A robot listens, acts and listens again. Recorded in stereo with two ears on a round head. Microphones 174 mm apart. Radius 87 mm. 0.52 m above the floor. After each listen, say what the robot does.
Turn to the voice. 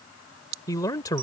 Turn 20° left.
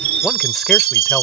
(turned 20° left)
Keep listening.
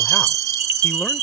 Keep listening.
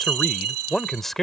Found it: a man speaking, straight ahead.